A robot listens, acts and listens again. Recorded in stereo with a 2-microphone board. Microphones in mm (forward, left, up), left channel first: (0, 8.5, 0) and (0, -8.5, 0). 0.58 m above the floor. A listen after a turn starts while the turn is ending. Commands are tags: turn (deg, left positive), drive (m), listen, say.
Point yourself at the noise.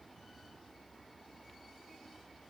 <listen/>
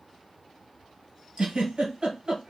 <turn deg="-60"/>
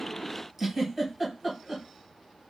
<say>Found it: a giggle, straight ahead.</say>